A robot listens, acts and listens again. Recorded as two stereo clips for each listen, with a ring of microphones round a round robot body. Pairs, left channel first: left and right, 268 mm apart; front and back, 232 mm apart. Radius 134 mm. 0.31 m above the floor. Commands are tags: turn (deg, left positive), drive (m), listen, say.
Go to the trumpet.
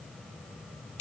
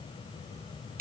<listen/>
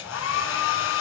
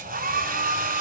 <listen/>
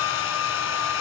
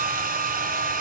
<say>I can't make out a trumpet, only a hair dryer.</say>